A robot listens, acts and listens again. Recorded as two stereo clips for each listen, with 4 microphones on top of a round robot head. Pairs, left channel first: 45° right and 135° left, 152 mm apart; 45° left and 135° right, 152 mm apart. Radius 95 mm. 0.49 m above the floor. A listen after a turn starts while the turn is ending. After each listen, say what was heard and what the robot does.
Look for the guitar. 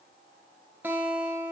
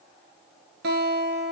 The guitar: 150° right. Turn 150° right.
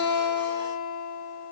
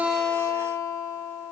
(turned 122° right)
The guitar is now 25° right. Turn 25° right.
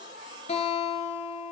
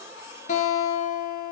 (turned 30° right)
Found it: a guitar, straight ahead.